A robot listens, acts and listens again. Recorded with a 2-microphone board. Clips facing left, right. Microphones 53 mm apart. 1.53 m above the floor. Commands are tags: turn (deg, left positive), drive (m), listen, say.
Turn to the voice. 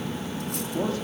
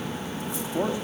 <turn deg="-20"/>
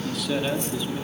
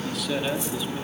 <say>Found it: a man speaking, straight ahead, over 4 m away.</say>